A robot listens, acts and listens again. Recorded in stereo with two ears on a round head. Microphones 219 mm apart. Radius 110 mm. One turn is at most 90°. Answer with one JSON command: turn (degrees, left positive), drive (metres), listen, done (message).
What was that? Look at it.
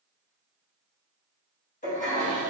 {"turn": 30}
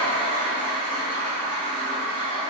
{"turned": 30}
{"done": "Facing the toilet flushing, 1 to 2 m away."}